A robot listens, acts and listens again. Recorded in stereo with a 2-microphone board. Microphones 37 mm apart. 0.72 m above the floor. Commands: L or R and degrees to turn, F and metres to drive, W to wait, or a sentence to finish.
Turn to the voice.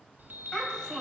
L25
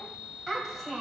Facing the child speaking, 2 to 4 m away.